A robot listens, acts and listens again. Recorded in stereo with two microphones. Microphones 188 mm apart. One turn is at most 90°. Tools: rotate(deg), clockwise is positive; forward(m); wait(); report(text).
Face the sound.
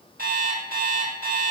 rotate(55)
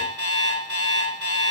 rotate(70)
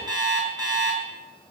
rotate(20)
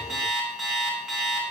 report("Found it: an alarm clock, straight ahead.")